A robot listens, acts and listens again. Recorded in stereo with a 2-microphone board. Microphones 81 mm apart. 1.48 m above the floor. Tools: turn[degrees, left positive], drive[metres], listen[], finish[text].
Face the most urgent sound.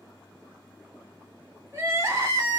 Thought: The crying: about 30° right or 150° right.
Action: turn[-30]
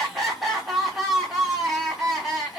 Action: finish[Found it: crying, straight ahead.]